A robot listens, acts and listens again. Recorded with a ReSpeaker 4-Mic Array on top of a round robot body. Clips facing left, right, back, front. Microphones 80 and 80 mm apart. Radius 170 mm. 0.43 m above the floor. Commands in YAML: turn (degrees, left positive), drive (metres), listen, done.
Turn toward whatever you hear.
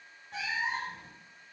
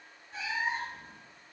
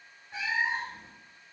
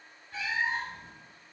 turn: 110
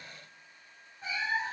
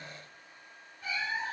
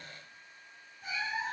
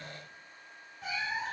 turn: 20
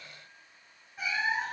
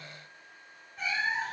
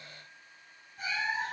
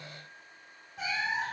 done: "Facing the cat meowing, under 1 m away."